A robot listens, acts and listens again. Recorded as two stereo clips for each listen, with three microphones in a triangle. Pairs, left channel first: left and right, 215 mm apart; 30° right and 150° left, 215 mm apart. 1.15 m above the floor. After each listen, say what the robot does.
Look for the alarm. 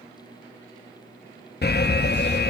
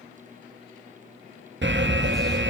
Turn 125° left.
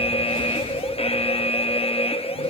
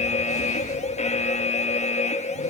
Turn 25° left.
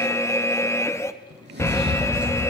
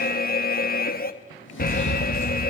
Turn 10° left.
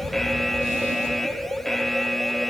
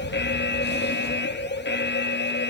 Facing the alarm.